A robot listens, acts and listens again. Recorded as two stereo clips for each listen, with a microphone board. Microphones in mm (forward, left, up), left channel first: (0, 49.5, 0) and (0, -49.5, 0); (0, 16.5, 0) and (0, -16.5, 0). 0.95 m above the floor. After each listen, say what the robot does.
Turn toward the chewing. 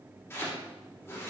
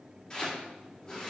Keep listening.
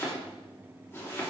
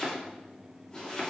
Keep listening.
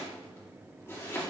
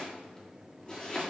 I can't make out chewing to turn to.